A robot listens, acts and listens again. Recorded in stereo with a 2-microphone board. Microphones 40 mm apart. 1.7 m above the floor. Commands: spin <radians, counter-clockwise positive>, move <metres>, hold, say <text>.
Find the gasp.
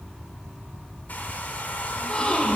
spin 0.52
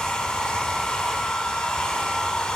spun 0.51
hold
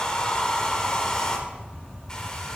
say I heard a gasp, but can't make it out now. It was about straight ahead or 120° left.